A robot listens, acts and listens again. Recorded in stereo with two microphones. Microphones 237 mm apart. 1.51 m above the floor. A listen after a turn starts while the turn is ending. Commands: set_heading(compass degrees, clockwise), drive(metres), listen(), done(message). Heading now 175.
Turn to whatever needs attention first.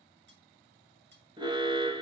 set_heading(195)
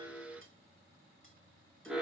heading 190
done("Found it: an alarm, straight ahead, 1 to 2 m away.")